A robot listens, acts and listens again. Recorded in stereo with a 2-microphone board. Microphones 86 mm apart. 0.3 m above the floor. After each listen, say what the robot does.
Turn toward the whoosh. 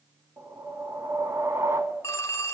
Turn 35° right.
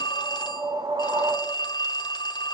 Turn 105° right.
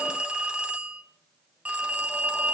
Keep listening.
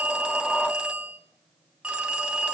Keep listening.
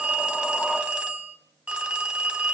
Facing where the whoosh came from. I can't hear it now.